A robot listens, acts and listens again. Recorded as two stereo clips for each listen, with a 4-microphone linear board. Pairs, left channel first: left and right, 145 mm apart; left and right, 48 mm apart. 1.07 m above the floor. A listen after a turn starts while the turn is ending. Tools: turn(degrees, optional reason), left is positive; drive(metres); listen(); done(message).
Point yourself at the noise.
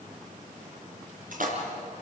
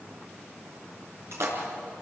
turn(degrees=-70, reason="The splash: about 70° right or 110° right.")
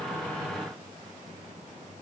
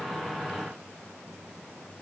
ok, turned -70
listen()
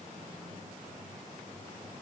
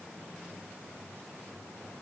done("I heard a splash, but can't make it out now. It was about straight ahead or 40° right.")